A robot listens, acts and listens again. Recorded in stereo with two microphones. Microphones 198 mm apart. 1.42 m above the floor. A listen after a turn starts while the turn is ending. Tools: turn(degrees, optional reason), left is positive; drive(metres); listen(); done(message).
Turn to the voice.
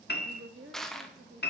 turn(degrees=-75, reason="The woman speaking: about 75° right or 105° right.")
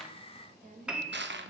turn(degrees=-40, reason="So it is at 40° right.")
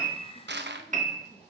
listen()
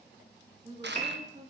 turn(degrees=-35, reason="The woman speaking is now 35° right.")
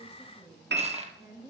turn(degrees=-15, reason="The woman speaking is now 15° right.")
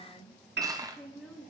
done("Facing the woman speaking, 2 to 4 m away.")